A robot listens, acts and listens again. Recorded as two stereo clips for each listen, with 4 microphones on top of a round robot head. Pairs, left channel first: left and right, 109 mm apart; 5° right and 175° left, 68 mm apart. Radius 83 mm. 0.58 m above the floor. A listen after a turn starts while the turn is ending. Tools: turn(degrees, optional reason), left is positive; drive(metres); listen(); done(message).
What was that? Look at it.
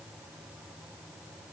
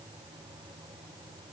listen()
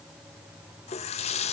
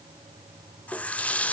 turn(degrees=70, reason="The running tap: 70° left.")
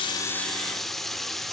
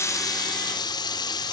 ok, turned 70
done("Found it: a running tap, straight ahead.")